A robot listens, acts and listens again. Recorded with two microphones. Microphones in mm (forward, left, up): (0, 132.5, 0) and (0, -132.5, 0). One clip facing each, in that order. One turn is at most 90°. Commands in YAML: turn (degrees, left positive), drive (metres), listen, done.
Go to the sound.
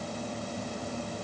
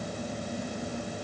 listen: true
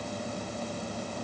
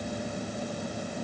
listen: true
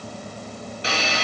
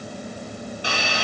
turn: 20
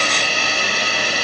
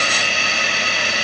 turn: 90
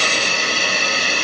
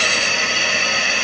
turn: 45
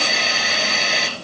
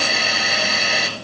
drive: 1.0
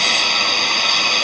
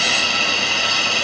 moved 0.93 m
drive: 1.0
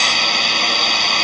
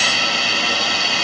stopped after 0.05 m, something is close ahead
done: "I am next to the hiss."